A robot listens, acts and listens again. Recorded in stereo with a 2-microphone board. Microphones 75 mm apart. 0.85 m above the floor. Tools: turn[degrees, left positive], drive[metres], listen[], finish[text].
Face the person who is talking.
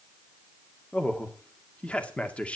Thought: The man speaking: about 15° left or 165° left.
Action: turn[15]
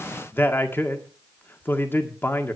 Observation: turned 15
Thought: So it is at 150° left.
Action: turn[150]
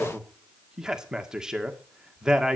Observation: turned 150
Thought: The man speaking is now 10° right.
Action: turn[-10]
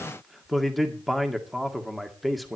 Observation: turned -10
Action: finish[Facing the man speaking.]